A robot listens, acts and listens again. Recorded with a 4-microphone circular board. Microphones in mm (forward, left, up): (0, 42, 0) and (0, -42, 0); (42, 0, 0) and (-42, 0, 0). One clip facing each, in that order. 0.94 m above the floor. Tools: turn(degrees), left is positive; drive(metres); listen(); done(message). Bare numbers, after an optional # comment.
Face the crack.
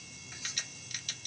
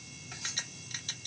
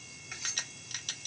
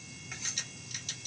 # The crack: 30° right.
turn(-30)
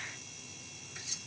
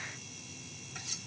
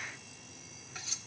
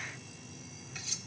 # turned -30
done("Facing where the crack came from. I can't hear it now.")